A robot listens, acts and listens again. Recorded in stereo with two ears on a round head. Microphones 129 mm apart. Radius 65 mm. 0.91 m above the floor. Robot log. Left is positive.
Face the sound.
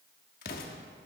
note: The explosion: about 75° left or 105° left.
cmd yaw +75
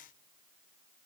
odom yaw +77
cmd idle
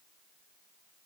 end: I heard an explosion, but can't make it out now. It was about 5° right or 30° left.